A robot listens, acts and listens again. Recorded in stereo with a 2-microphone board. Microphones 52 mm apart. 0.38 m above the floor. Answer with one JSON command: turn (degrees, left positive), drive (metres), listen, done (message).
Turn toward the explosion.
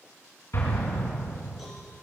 {"turn": 50}
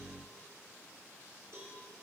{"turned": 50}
{"listen": true}
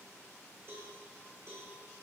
{"done": "I heard an explosion, but can't make it out now. It was about straight ahead or 80° left."}